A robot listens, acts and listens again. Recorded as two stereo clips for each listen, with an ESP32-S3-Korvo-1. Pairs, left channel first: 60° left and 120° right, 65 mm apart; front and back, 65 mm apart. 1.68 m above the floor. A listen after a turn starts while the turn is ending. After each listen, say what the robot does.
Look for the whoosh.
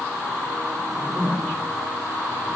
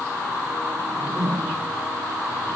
Turn 140° left.
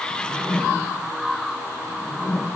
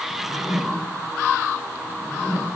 Turn 15° left.
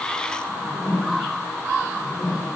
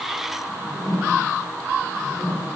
Found it: a whoosh, straight ahead.